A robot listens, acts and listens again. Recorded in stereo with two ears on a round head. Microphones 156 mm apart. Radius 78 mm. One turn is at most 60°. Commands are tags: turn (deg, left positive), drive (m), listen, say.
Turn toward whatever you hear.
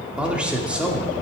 <turn deg="-30"/>
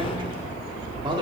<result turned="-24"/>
<listen/>
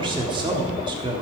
<turn deg="-60"/>
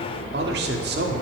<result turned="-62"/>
<turn deg="-60"/>
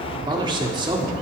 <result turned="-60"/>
<turn deg="-30"/>
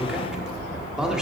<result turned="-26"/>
<say>Found it: a man speaking, straight ahead.</say>